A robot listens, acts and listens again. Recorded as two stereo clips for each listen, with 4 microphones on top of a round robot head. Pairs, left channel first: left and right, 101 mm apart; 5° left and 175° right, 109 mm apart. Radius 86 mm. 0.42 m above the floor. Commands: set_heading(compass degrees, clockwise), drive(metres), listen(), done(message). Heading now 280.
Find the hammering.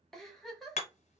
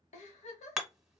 set_heading(180)
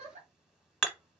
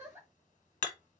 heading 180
done("Facing the hammering.")